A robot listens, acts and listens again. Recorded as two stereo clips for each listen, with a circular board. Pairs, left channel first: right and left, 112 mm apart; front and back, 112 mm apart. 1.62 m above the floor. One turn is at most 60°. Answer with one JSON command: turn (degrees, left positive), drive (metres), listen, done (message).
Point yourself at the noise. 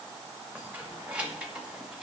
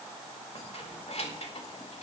{"turn": 10}
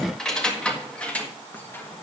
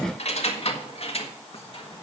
{"turn": -20}
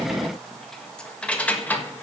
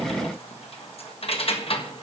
{"turn": -20}
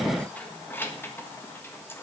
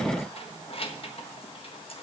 {"turn": -20}
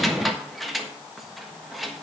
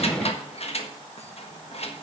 {"done": "Facing the keys jangling."}